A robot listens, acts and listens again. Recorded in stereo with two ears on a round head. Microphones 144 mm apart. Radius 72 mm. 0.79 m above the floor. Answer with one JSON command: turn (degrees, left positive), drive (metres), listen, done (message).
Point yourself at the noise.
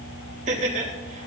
{"turn": -50}
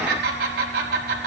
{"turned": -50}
{"turn": -75}
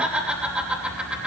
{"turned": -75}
{"done": "Found it: laughter, straight ahead."}